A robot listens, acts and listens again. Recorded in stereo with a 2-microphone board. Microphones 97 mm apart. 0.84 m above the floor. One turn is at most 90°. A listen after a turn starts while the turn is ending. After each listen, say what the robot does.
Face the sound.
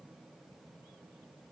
Keep listening.
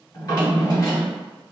Turn 40° left.
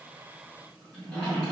Found it: a drawer, straight ahead, 1 to 2 m away.